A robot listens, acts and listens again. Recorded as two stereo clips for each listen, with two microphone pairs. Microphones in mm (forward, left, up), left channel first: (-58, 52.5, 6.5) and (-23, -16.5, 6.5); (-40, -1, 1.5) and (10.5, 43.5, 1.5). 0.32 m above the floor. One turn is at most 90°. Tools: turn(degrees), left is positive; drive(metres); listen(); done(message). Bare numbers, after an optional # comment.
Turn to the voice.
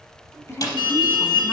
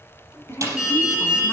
# The woman speaking: 165° left.
turn(90)
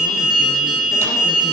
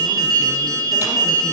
# Nothing new. It was at 75° left.
turn(75)
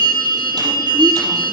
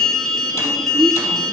listen()
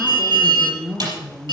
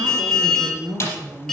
# The woman speaking is now 35° left.
turn(35)
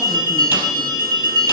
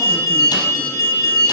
listen()
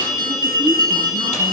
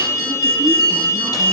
listen()
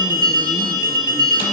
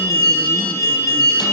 done("I heard a woman speaking from this way, but can't make it out now.")